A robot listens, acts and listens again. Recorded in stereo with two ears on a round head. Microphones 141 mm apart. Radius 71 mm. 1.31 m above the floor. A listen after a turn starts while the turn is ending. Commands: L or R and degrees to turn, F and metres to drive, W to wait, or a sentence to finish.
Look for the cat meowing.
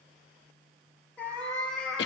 L30
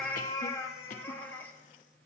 L30
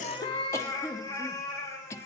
L15
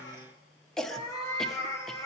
L155
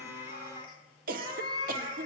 L35
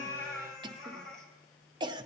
Facing the cat meowing, 2 to 4 m away.